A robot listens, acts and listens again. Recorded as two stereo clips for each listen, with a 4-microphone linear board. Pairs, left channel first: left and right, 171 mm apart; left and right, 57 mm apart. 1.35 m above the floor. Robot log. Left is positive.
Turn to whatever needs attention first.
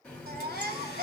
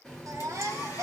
note: The baby crying: about 65° right or 115° right.
cmd yaw -65
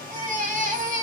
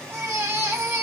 note: So it is at 50° right.
cmd yaw -50
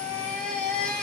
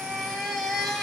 end: Facing the baby crying, under 1 m away.